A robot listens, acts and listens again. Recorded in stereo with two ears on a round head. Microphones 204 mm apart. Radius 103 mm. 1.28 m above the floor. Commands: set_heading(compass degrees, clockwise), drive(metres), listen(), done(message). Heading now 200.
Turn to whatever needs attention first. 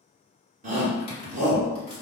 set_heading(235)
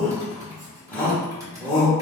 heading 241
done("Found it: a shout, straight ahead.")